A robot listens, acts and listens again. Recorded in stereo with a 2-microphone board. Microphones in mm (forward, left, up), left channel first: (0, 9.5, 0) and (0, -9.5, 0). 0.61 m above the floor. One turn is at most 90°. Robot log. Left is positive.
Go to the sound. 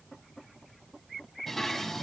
cmd yaw +30
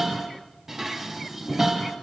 note: So it is at 20° right.
cmd yaw -20
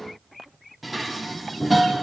cmd fwd 1.0
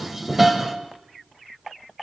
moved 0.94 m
note: The dishes clattering is now 15° right.
cmd yaw -15
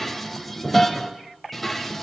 cmd fwd 1.0
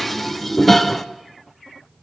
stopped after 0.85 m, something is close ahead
end: Arrived at the dishes clattering, straight ahead.